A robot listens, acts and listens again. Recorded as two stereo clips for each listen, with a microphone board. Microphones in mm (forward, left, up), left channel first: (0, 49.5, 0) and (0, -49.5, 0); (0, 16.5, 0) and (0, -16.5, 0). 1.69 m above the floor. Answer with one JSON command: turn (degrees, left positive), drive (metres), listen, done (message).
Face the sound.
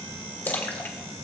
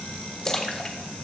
{"turn": 20}
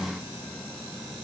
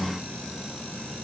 {"listen": true}
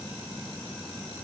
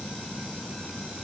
{"done": "I heard a splash, but can't make it out now. It was about straight ahead or 140° left."}